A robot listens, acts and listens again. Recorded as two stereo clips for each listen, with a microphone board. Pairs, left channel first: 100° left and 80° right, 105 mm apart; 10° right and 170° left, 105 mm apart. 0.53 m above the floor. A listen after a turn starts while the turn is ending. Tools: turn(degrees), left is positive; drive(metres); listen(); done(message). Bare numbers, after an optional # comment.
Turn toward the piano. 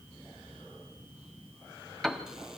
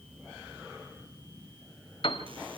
# The piano: 15° left.
turn(15)
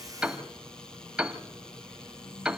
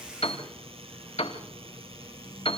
done("Facing the piano, 1 to 2 m away.")